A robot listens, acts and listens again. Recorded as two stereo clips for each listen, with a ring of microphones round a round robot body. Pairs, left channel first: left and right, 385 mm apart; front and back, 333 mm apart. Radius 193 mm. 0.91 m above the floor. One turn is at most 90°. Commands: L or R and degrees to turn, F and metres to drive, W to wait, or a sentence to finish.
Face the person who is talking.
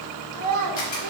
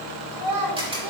R90
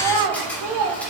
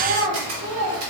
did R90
R90
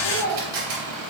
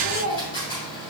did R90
R60
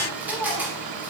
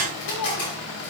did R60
Found it: a child speaking, straight ahead.